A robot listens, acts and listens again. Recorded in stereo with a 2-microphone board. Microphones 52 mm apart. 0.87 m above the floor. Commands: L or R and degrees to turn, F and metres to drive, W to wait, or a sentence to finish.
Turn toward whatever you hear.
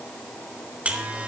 R25
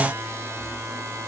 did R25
R125
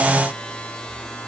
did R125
L20
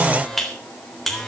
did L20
Found it: a buzzer, straight ahead.